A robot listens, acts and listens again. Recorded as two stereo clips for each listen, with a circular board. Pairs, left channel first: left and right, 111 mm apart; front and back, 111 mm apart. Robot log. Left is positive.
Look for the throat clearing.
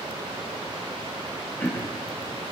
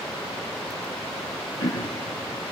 note: The throat clearing: 20° left.
cmd yaw +20
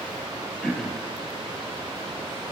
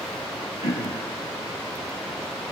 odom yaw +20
end: Found it: throat clearing, straight ahead, 1 to 2 m away.